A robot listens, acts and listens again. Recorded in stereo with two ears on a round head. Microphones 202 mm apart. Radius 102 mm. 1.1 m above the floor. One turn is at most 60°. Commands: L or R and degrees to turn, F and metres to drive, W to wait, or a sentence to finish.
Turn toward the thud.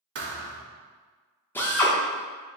R50
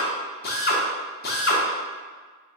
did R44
W
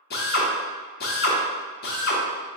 I heard a thud, but can't make it out now. It was about 5° right or 85° right.